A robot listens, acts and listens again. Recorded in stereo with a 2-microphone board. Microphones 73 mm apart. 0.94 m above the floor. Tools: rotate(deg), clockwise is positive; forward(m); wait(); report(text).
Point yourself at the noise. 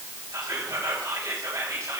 rotate(45)
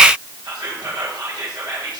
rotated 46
rotate(85)
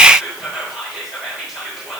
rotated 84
report("Found it: whispering, straight ahead, 2 to 4 m away.")